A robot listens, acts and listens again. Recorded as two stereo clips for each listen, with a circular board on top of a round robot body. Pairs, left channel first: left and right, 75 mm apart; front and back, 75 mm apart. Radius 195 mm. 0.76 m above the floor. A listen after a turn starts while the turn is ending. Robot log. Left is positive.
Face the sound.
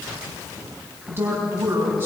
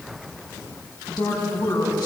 note: The woman speaking: 30° right.
cmd yaw -30
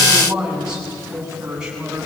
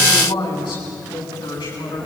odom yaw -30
note: The woman speaking is now 10° right.
cmd yaw -10
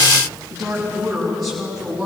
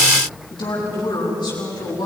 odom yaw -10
end: Facing the woman speaking.